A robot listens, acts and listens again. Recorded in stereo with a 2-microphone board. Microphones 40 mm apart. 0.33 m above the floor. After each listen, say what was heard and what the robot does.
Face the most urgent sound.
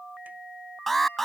Turn 30° left.
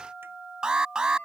So it is at 25° right. Turn 25° right.
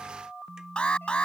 The alarm is now 30° left. Turn 30° left.
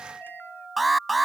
Found it: an alarm, straight ahead.